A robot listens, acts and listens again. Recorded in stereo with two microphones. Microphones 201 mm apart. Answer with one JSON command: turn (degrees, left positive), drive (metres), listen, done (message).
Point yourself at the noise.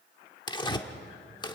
{"turn": 20}
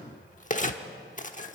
{"turn": 135}
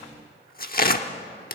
{"turn": 55}
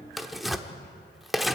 {"done": "Facing the tearing paper."}